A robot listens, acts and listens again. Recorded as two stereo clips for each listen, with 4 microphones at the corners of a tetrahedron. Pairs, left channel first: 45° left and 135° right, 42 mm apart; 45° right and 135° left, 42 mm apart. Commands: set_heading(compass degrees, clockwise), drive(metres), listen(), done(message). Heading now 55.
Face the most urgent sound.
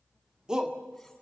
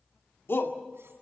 set_heading(120)
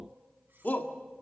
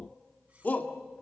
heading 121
done("Found it: a shout, straight ahead.")